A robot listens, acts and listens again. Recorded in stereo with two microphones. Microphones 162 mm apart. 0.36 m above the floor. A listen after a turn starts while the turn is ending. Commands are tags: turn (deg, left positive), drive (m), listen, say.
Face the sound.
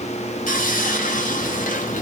<turn deg="55"/>
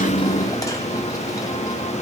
<listen/>
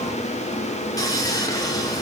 <turn deg="25"/>
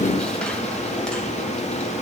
<listen/>
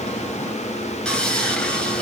<say>Facing the sawing.</say>